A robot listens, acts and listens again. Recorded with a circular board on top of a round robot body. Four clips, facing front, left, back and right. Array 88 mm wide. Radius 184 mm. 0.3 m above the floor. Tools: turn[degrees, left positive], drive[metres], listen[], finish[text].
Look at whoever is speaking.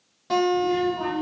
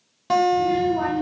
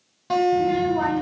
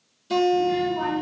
Thought: The child speaking: 170° left.
Action: turn[170]
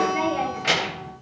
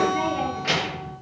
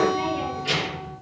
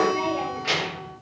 Thought: The child speaking is now 10° left.
Action: turn[10]
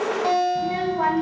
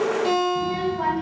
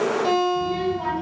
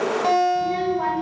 Action: finish[Found it: a child speaking, straight ahead, 1 to 2 m away.]